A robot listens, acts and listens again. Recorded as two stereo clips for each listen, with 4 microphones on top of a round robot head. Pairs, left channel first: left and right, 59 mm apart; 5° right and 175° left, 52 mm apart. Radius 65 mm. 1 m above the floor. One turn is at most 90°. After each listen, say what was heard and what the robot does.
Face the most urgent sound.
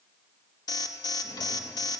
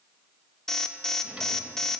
The alarm: 80° left. Turn 80° left.
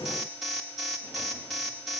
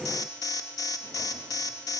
Found it: an alarm, straight ahead, 1 to 2 m away.